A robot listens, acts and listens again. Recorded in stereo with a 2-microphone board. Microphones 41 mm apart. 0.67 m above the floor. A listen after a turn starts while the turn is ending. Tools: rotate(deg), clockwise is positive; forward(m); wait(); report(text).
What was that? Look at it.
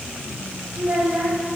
rotate(60)
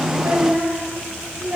rotate(40)
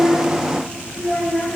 report("Found it: a child speaking, straight ahead, 2 to 4 m away.")